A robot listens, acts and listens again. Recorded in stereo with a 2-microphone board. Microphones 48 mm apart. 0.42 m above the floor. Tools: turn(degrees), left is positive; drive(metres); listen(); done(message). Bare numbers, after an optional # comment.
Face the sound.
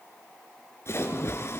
# The splash: about 65° left or 115° left.
turn(65)
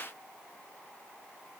listen()
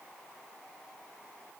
done("I heard a splash, but can't make it out now. It was about straight ahead or 50° left.")